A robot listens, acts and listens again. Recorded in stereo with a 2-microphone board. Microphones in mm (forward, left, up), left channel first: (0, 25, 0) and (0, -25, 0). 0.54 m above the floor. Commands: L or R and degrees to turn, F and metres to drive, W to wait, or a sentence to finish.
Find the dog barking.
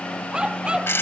R20
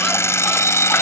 W
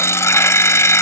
W
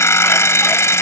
I heard a dog barking, but can't make it out now. It was about straight ahead or 140° right.